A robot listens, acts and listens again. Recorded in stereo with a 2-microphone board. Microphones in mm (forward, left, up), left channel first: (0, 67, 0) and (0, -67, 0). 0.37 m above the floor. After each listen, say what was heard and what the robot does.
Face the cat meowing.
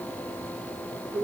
Keep listening.
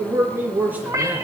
The cat meowing: about 25° right or 155° right. Turn 25° right.
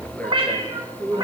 The cat meowing: about 35° right or 145° right. Turn 35° right.
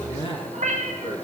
So it is at 115° right. Turn 115° right.
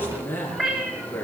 The cat meowing is now 10° right. Turn 10° right.
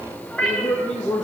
Found it: a cat meowing, straight ahead, 2 to 4 m away.